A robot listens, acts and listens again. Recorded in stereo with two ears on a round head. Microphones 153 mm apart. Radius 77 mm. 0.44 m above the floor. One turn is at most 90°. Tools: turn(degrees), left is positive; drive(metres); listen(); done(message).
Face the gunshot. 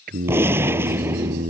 turn(degrees=-30)
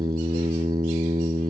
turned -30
listen()
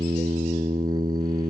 done("I heard a gunshot, but can't make it out now. It was about 15° left or 135° right.")